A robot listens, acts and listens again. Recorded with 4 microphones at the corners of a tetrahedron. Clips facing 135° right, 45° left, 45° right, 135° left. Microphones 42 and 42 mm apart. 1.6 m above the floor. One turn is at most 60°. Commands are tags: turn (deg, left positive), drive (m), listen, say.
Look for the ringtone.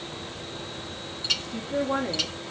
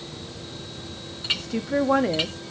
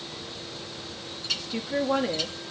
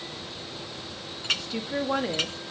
<listen/>
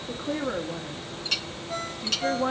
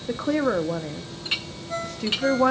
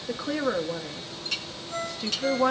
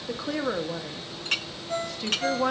<turn deg="60"/>
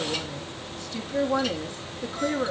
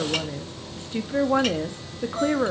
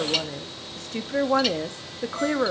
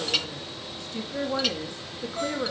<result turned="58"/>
<turn deg="60"/>
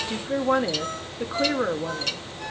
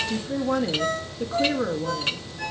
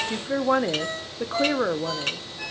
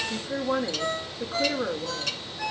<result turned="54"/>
<turn deg="30"/>
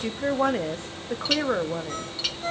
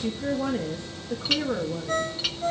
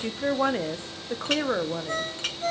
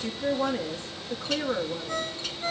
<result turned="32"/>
<say>Facing the ringtone, 2 to 4 m away.</say>